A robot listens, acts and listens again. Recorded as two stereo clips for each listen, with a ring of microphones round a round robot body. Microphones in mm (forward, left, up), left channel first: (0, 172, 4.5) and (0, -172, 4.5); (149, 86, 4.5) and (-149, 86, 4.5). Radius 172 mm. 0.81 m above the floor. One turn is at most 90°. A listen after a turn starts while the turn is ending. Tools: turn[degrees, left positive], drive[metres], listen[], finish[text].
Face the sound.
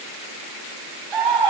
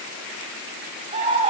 Thought: The scream: 105° right.
Action: turn[-90]
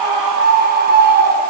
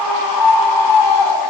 Thought: The scream is now 25° right.
Action: turn[-25]
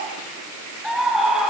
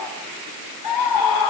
Action: finish[Found it: a scream, straight ahead.]